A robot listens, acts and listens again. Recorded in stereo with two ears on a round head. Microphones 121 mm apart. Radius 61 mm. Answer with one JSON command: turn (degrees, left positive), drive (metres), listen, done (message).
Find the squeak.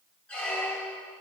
{"turn": 30}
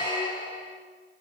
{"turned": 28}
{"turn": 135}
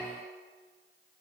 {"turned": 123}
{"turn": 10}
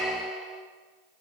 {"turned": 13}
{"done": "Facing the squeak, 1 to 2 m away."}